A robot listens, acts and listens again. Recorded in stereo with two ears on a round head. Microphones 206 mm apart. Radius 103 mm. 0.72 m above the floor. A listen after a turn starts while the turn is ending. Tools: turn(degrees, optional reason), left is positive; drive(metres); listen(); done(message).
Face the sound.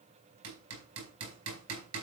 turn(degrees=-90)
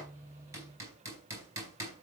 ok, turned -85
turn(degrees=-15, reason="So it is at 15° right.")
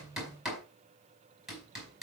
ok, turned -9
done("Facing the hammering.")